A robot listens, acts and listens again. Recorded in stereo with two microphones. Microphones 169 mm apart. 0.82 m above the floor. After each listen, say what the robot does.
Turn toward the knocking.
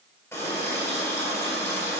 Keep listening.
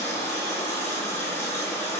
Keep listening.
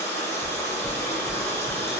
Turn 45° right.
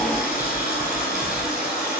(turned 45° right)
Found it: knocking, straight ahead.